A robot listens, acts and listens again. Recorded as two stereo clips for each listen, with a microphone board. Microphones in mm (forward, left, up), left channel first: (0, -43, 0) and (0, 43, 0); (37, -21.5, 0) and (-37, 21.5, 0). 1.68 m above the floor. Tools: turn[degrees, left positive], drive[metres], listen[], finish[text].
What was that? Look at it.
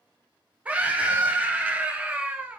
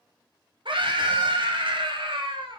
Thought: The scream: 165° left.
Action: turn[165]
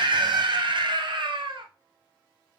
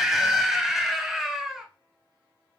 Thought: The scream is now 65° left.
Action: turn[65]
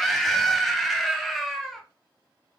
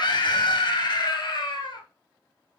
Action: finish[Found it: a scream, straight ahead.]